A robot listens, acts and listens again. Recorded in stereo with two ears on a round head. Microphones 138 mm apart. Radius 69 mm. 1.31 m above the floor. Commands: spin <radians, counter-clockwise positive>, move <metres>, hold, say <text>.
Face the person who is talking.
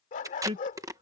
spin -0.61
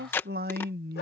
spin -1.92
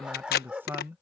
spin -0.26
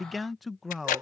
say Found it: a man speaking, straight ahead.